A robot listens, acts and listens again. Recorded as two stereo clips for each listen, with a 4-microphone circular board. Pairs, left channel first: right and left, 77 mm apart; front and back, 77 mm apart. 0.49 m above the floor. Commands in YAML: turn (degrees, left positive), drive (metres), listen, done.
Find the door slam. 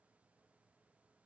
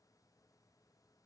listen: true
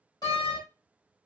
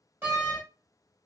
turn: -115
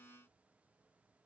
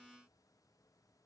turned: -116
done: "I heard a door slam from this way, but can't make it out now."